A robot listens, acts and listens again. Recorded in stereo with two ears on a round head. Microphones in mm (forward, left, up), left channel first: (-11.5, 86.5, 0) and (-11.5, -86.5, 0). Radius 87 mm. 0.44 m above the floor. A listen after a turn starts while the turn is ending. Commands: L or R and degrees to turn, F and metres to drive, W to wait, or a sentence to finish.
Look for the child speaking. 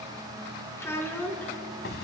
L30
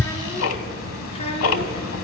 L145
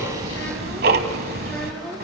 L10
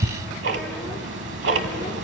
W
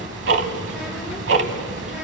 W
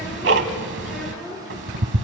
Found it: a child speaking, straight ahead, over 4 m away.